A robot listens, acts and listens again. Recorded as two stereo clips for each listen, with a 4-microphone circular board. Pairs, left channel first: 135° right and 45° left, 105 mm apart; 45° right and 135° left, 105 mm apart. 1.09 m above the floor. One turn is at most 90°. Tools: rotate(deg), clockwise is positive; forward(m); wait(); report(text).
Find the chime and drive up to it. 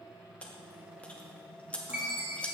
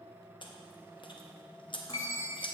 rotate(25)
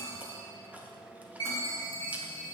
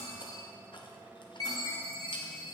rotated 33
forward(1.0)
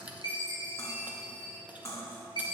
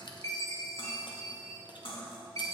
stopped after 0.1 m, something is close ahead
rotate(-10)
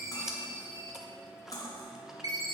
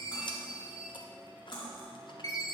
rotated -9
report("Blocked. The chime is further on, straight ahead.")